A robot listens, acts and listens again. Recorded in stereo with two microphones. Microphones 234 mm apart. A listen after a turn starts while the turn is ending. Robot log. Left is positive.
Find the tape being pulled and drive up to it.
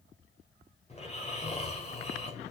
cmd idle
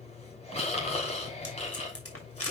cmd yaw +90
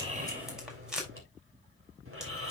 cmd fwd 1.0
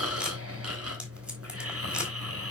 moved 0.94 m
cmd idle
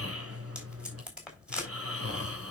cmd fwd 1.0
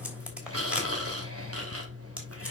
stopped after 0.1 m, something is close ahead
cmd idle
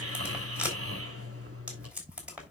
end: Blocked. The tape being pulled is further on, straight ahead.